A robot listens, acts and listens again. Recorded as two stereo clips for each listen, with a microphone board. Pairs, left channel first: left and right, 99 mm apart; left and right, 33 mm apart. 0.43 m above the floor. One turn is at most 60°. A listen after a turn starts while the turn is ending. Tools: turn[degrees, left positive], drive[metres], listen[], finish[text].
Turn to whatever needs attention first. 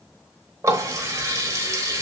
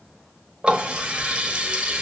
Action: listen[]
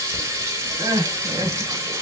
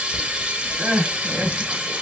Thought: The crying: about 45° right or 135° right.
Action: turn[-45]
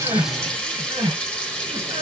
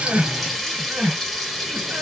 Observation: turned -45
Thought: So it is at 80° right.
Action: turn[-60]
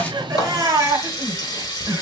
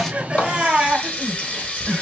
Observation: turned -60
Thought: The crying is now 40° right.
Action: turn[-40]
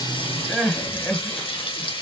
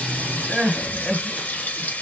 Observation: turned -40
Thought: The crying is now 10° left.
Action: turn[10]
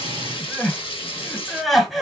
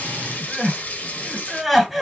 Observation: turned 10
Action: finish[Facing the crying.]